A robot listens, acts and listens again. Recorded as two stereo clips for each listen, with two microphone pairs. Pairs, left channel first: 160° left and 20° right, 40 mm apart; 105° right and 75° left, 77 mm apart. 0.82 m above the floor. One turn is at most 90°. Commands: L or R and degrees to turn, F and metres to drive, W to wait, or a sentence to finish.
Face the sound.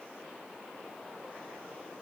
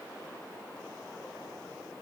W
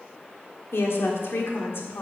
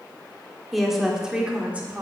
L90
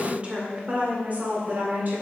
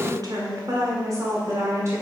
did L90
L25
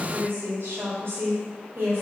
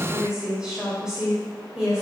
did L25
Facing the woman speaking.